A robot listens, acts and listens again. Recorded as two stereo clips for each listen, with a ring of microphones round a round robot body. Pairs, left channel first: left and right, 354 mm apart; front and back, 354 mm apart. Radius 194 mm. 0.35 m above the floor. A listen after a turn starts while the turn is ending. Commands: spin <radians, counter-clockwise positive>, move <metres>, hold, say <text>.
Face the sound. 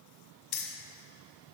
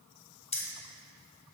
spin 1.31
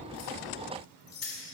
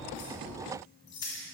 spin 0.79
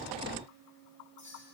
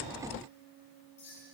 spin 0.35
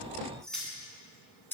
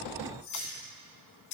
say Found it: keys jangling, straight ahead.